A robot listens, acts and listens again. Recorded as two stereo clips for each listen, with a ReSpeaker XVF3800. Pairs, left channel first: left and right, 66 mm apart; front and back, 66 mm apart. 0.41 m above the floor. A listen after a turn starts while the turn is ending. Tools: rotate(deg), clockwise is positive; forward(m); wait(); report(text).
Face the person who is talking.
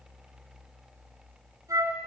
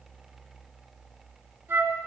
wait()
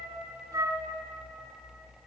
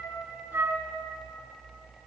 wait()
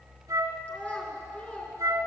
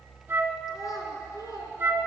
rotate(-20)
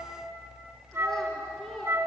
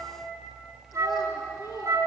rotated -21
report("Facing the child speaking.")